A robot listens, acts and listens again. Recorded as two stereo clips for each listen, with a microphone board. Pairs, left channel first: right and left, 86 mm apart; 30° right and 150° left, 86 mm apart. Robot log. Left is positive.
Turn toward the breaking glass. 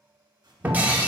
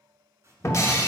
note: The breaking glass: 20° left.
cmd yaw +20
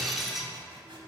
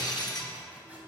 end: Found it: breaking glass, straight ahead, under 1 m away.